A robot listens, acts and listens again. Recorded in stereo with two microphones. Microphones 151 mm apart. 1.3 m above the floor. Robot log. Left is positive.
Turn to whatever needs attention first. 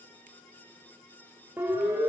cmd yaw -30
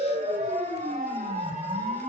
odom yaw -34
note: So it is at 135° right.
cmd yaw -135
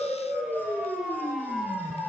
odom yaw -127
end: Found it: a siren, straight ahead.